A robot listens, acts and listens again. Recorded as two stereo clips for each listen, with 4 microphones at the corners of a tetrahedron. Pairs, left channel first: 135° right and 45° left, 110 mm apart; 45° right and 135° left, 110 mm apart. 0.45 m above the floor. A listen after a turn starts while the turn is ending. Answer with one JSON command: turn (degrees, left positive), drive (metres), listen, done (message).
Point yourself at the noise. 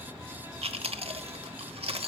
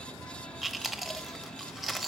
{"turn": 45}
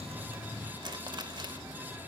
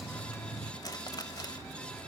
{"done": "Found it: chewing, straight ahead."}